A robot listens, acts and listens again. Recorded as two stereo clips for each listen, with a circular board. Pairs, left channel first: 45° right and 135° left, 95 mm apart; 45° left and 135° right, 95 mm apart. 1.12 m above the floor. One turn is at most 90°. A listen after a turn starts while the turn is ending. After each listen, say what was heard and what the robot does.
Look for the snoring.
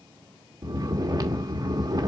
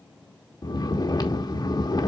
The snoring: 90° left. Turn 90° left.
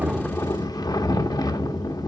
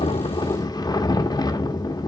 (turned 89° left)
Facing the snoring.